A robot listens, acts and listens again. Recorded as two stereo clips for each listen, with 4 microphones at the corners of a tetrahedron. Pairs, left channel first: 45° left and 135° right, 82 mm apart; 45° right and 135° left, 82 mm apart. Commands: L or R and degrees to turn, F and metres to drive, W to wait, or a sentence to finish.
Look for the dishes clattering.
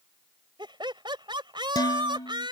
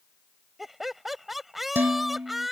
L70
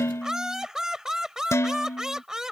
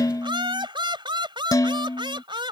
R10
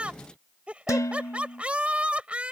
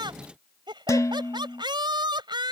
Found it: dishes clattering, straight ahead.